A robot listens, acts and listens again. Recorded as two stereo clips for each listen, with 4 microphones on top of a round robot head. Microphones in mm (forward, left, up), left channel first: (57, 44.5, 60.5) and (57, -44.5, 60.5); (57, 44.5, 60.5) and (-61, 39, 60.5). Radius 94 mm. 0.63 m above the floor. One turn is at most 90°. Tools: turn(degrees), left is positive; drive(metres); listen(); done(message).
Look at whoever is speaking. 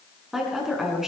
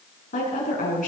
done("Found it: a woman speaking, straight ahead.")